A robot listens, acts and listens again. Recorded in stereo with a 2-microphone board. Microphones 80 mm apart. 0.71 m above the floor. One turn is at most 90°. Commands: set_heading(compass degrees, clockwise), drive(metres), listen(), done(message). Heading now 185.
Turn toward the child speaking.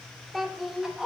set_heading(155)
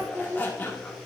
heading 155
set_heading(185)
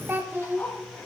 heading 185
set_heading(210)
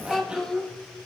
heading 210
done("Found it: a child speaking, straight ahead.")